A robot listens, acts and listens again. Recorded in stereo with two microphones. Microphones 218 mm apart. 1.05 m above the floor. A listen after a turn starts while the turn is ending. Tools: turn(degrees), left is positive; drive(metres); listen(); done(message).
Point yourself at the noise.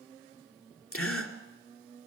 turn(degrees=90)
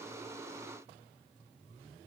done("Facing where the gasp came from. I can't hear it now.")